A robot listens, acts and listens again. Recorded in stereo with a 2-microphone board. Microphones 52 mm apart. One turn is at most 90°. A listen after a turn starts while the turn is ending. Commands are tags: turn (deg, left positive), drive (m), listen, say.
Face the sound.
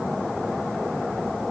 <listen/>
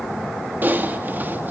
<turn deg="-40"/>
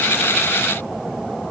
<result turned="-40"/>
<listen/>
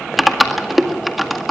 <say>Found it: typing on a keyboard, straight ahead.</say>